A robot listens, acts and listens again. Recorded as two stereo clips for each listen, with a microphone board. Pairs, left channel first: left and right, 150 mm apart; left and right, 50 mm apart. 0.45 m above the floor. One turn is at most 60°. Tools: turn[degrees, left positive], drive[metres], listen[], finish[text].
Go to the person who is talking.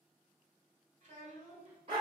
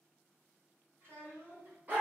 Thought: The child speaking: about 60° right or 120° right.
Action: turn[-60]
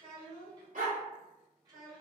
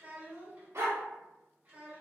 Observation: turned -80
Thought: So it is at 30° right.
Action: turn[-30]
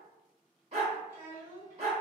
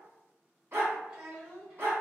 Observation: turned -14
Thought: The child speaking is now 15° right.
Action: turn[-15]
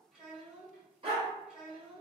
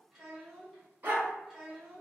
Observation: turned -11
Action: drive[1.0]
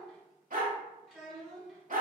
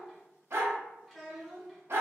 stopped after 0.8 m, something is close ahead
Action: finish[I am next to the child speaking.]